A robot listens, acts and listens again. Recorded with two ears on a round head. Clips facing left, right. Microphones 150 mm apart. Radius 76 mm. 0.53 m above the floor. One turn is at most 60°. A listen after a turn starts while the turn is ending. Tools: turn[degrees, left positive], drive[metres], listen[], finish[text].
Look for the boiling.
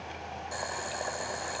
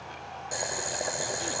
Thought: The boiling: about 30° right or 150° right.
Action: turn[-30]
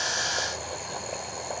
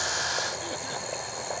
Action: finish[Found it: boiling, straight ahead.]